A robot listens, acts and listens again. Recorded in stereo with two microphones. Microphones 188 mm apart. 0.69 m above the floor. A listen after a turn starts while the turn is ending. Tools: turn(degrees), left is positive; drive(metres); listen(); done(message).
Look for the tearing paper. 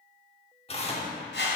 turn(degrees=30)
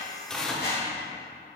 done("Facing the tearing paper, 1 to 2 m away.")